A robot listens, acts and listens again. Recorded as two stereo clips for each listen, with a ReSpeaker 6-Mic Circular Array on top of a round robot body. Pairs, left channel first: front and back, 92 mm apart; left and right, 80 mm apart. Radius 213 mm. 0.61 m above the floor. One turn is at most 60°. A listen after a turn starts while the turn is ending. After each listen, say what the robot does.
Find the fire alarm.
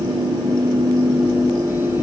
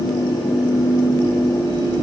Keep listening.
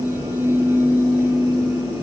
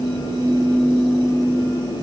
Keep listening.
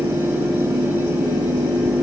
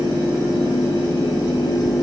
I can't make out a fire alarm to turn to.